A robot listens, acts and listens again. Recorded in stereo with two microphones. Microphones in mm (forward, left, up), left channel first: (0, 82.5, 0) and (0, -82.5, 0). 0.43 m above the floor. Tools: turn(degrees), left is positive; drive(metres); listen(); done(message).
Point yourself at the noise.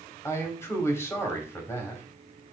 turn(degrees=15)
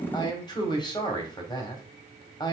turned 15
turn(degrees=155)
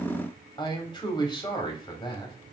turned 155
turn(degrees=35)
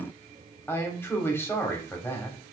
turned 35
turn(degrees=15)
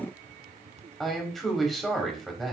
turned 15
done("Found it: a man speaking, straight ahead, 2 to 4 m away.")